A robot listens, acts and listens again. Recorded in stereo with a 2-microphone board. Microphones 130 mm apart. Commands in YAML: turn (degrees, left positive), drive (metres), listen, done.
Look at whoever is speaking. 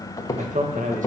turn: -90
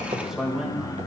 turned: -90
turn: -10
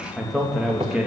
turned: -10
turn: -10
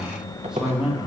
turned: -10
turn: -10
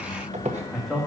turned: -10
done: "Facing the man speaking, 2 to 4 m away."